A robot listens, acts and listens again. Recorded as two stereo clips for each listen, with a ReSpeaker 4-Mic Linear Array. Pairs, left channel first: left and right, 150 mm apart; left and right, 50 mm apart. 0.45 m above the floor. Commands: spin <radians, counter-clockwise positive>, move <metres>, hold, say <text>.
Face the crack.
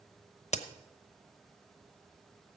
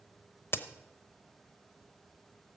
spin 0.87
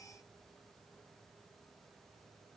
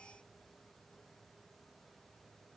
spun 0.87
hold
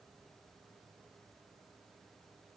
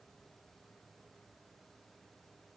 say I heard a crack, but can't make it out now. It was about straight ahead or 80° left.